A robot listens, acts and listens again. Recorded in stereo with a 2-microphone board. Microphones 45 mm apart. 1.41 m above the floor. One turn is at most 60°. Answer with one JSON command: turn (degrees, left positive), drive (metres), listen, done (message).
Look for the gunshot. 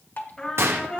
{"turn": -60}
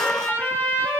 {"listen": true}
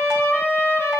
{"done": "I heard a gunshot, but can't make it out now. It was about straight ahead or 60° right."}